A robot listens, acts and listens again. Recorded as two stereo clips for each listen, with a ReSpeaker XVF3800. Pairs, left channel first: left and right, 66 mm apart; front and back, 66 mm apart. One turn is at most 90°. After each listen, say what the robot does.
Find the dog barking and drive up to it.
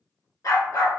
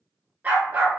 Turn 90° left.
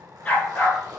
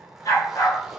Turn 20° left.
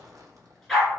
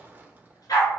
Drive 1.0 m forward.
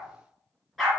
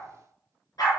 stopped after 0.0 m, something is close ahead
Something is in my way. I am facing the dog barking but have not reached it.